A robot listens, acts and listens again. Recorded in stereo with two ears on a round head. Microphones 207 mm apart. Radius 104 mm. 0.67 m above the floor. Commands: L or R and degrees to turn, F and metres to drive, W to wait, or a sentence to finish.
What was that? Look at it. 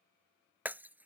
R30
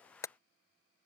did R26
L15
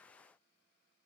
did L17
Facing where the breaking glass came from. I can't hear it now.